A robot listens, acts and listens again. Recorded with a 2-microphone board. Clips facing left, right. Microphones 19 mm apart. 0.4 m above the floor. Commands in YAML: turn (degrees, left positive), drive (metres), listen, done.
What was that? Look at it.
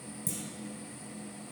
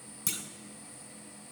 turn: -70
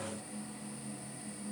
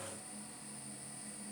listen: true
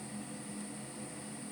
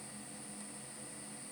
done: "I heard a clunk, but can't make it out now. It was about straight ahead or 40° right."